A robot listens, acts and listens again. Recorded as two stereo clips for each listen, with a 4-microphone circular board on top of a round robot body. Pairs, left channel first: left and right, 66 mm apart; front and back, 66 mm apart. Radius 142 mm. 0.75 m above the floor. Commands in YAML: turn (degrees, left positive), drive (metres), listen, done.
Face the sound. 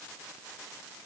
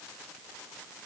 listen: true
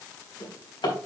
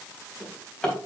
turn: 80
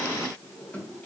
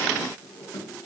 turn: 20
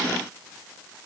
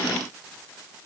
listen: true
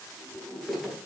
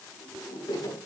done: "Facing the drawer, 2 to 4 m away."